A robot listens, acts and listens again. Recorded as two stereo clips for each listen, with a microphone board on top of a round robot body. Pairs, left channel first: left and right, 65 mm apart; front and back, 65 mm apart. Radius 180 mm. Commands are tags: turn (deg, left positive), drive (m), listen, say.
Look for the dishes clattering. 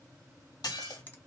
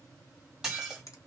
<turn deg="95"/>
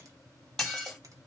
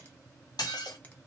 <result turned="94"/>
<say>Found it: dishes clattering, straight ahead.</say>